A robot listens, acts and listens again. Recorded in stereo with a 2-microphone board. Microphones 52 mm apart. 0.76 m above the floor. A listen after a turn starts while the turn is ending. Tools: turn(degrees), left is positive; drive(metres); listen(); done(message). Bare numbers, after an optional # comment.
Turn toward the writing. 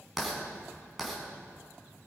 turn(30)
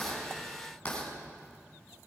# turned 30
# So it is at 155° left.
turn(155)
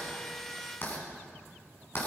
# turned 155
# The writing is now 45° left.
turn(45)
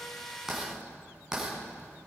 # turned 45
# The writing is now 10° right.
turn(-10)
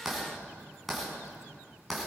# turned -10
done("Facing the writing, over 4 m away.")